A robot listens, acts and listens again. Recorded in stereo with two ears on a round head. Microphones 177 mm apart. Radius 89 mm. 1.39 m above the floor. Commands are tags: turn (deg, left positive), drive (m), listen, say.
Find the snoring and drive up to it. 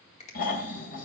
<turn deg="50"/>
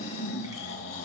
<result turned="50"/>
<turn deg="75"/>
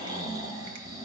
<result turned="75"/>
<turn deg="-20"/>
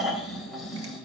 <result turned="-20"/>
<drive m="1.0"/>
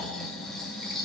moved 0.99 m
<drive m="1.0"/>
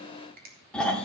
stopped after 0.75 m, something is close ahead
<say>I am next to the snoring.</say>